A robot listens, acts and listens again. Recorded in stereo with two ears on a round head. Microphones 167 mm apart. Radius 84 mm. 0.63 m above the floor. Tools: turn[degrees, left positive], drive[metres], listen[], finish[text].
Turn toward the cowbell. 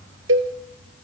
Thought: The cowbell: about 75° right or 105° right.
Action: turn[-75]
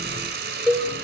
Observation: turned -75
Action: finish[Facing the cowbell, 2 to 4 m away.]